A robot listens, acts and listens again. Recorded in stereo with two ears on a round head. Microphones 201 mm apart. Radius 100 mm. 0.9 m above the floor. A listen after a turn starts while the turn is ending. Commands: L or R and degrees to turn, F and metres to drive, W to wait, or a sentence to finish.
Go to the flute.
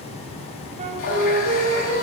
R30
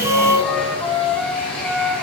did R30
F1.0
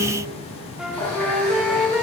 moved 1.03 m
F1.0
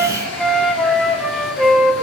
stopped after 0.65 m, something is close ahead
Arrived at the flute, straight ahead.